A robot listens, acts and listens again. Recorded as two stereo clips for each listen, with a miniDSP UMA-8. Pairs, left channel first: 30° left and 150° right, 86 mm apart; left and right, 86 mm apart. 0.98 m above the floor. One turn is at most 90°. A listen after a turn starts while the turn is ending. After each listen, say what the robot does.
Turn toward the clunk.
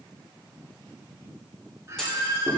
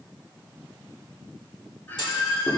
Turn 90° left.
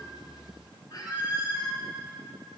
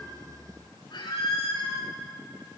Turn 20° left.
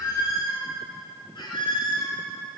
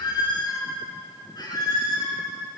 I heard a clunk from this way, but can't make it out now.